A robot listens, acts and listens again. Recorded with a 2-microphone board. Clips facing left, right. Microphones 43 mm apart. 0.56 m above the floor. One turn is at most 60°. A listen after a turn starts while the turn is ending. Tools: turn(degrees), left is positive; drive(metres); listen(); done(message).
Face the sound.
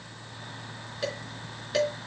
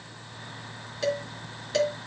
turn(degrees=30)
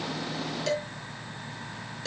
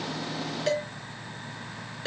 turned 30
turn(degrees=-25)
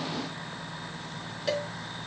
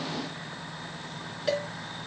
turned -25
done("Found it: dishes clattering, straight ahead.")